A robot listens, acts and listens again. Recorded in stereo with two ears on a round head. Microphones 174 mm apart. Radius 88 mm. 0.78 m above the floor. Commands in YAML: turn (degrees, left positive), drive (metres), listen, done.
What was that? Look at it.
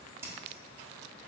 turn: -30
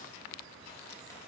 listen: true
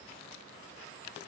listen: true
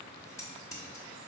turn: 15
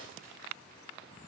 listen: true
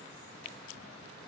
listen: true
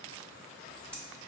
done: "Found it: scissors, straight ahead, under 1 m away."